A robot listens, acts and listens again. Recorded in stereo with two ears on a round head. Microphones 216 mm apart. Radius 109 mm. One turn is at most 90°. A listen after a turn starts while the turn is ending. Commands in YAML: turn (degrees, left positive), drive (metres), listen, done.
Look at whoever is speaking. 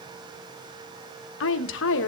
turn: 55
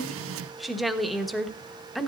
done: "Found it: a woman speaking, straight ahead, 1 to 2 m away."